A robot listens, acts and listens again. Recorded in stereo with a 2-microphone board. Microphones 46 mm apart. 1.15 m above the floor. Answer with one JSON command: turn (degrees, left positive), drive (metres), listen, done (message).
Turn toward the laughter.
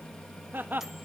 {"turn": -45}
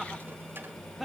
{"done": "Found it: laughter, straight ahead, 1 to 2 m away."}